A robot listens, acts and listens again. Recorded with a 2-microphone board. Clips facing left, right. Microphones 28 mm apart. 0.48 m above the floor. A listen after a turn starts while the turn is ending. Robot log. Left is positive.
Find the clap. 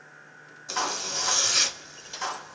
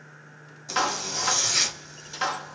note: The clap: about 50° right or 130° right.
cmd yaw -50
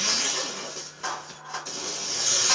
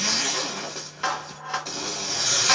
note: So it is at 65° right.
cmd yaw -65
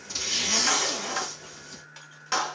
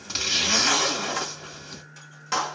note: The clap is now 10° left.
cmd yaw +10
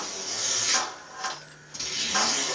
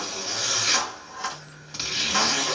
end: Found it: a clap, straight ahead.